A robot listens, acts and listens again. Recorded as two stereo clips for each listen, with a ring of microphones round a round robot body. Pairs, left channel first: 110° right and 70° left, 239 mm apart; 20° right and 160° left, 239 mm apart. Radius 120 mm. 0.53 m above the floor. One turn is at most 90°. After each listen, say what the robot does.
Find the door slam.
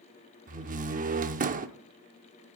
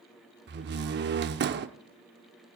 Turn 90° left.
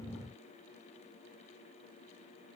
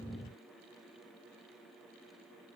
Turn 30° left.
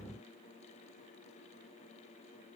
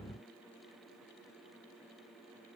Facing where the door slam came from. I can't hear it now.